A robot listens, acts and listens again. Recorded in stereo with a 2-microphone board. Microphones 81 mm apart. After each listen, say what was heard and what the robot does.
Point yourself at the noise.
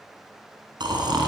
The snoring: about 70° right or 110° right. Turn 70° right.
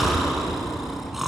Found it: snoring, straight ahead.